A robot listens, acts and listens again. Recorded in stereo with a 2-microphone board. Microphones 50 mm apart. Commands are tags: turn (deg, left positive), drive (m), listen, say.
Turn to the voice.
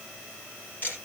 <listen/>
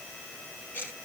<listen/>
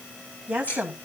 <turn deg="-25"/>
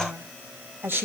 <turn deg="-130"/>
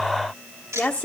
<turn deg="25"/>
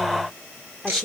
<say>Facing the woman speaking.</say>